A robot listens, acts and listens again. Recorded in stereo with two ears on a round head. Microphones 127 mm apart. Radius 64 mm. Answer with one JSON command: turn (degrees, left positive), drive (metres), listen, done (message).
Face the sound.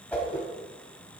{"turn": 30}
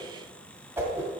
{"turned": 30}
{"turn": -20}
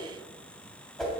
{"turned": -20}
{"done": "Found it: a whoosh, straight ahead, 1 to 2 m away."}